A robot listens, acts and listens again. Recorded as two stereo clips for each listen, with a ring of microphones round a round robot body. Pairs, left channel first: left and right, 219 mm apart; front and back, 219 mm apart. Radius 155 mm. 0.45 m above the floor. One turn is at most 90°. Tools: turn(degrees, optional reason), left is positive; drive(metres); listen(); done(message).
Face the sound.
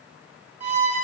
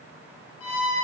turn(degrees=-30, reason="The violin: 30° right.")
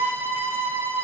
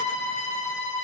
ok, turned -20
turn(degrees=-10, reason="The violin is now 10° right.")
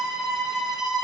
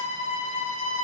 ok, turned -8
done("Facing the violin.")